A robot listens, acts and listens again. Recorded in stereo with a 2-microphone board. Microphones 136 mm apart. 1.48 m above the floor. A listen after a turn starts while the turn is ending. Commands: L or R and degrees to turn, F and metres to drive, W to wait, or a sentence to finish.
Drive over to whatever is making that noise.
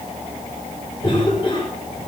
L40
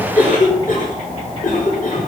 L100
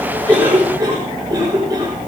R30
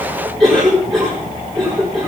F1.0
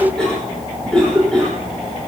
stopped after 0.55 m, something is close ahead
Something is in my way. I am facing the cough but have not reached it.